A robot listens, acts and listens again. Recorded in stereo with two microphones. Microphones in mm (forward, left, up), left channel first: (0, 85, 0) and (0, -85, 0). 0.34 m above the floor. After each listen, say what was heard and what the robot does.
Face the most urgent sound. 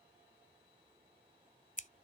Keep listening.
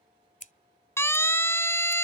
Turn 30° left.
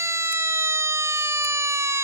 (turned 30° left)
So it is at 15° right. Turn 15° right.
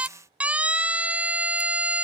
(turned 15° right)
The siren is now 10° right. Turn 10° right.
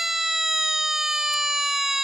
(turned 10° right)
Facing the siren.